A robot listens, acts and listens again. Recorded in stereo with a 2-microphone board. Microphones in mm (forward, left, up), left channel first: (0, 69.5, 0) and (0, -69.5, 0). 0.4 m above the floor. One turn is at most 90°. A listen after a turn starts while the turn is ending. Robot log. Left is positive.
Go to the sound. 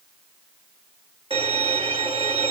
note: The violin: about 40° right or 140° right.
cmd yaw -40
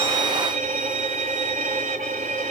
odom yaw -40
note: So it is at 95° right.
cmd yaw -90
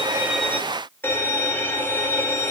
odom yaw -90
note: The violin is now 15° left.
cmd yaw +15
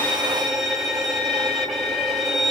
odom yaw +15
cmd fwd 1.0
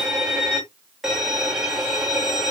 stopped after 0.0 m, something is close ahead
end: Blocked. The violin is further on, straight ahead.